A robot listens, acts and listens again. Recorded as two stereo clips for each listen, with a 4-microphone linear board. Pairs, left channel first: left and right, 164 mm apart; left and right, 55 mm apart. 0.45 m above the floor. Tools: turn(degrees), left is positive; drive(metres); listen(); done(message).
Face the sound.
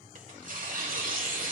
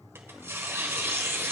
turn(degrees=-60)
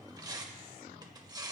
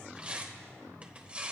turn(degrees=-30)
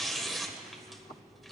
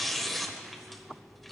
done("Found it: tearing paper, straight ahead, 1 to 2 m away.")